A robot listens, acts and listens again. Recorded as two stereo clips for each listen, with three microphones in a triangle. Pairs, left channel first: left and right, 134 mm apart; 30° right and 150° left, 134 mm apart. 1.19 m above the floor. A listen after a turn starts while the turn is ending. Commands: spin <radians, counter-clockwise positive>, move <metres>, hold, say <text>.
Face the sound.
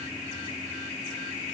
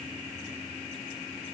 hold
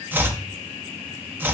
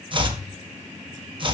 spin -2.88
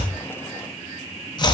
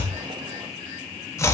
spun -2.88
spin 0.61
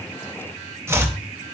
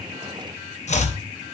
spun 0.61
spin -0.35
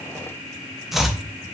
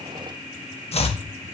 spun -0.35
say Found it: chopping, straight ahead, under 1 m away.